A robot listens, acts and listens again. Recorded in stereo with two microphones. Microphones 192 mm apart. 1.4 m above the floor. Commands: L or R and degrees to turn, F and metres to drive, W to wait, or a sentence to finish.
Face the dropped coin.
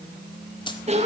L25
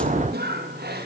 W
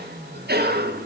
I heard a dropped coin, but can't make it out now. It was about straight ahead or 130° left.